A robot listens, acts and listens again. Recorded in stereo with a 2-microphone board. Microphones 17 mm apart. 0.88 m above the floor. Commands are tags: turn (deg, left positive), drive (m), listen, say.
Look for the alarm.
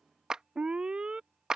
<turn deg="-60"/>
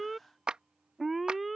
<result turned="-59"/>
<say>Facing the alarm.</say>